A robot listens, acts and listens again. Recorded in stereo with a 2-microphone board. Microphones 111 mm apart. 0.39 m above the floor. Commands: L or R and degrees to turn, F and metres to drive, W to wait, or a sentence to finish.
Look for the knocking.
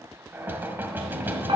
R20
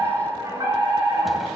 W
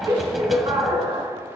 W
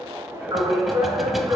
I heard knocking, but can't make it out now. It was about straight ahead or 140° right.